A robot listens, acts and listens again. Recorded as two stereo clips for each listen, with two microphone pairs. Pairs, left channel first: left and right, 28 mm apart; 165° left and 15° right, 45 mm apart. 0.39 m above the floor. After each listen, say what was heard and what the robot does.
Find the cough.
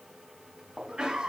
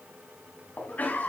The cough: 145° right. Turn 145° right.
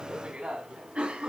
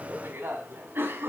The cough is now 45° right. Turn 45° right.
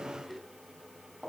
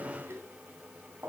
Facing the cough, 2 to 4 m away.